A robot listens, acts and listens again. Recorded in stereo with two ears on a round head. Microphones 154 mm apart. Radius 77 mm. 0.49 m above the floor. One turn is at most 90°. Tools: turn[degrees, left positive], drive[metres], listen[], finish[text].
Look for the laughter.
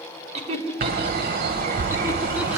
Thought: The laughter: about 35° right or 145° right.
Action: turn[-35]
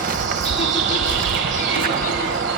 Action: listen[]
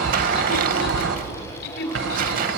Thought: So it is at 65° left.
Action: turn[65]
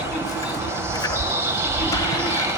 Action: listen[]
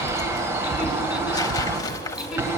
Action: listen[]
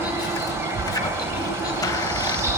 Action: finish[I heard laughter from this way, but can't make it out now.]